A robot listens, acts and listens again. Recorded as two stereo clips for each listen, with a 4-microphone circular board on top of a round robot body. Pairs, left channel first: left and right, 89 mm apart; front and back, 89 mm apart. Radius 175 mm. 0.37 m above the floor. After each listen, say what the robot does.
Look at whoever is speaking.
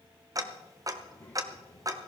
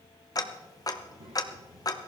Turn 160° left.
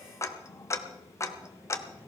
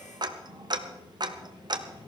Turn 20° right.
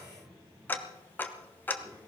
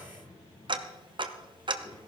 Turn 10° right.
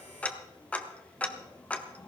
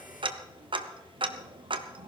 Keep listening.
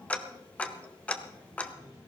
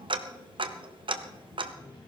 Found it: a child speaking, straight ahead.